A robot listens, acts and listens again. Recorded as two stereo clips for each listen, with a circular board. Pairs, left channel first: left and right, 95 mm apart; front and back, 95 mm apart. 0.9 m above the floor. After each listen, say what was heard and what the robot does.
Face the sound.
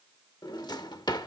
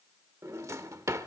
The drawer: 125° left. Turn 125° left.
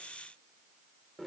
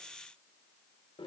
Found it: a drawer, straight ahead, under 1 m away.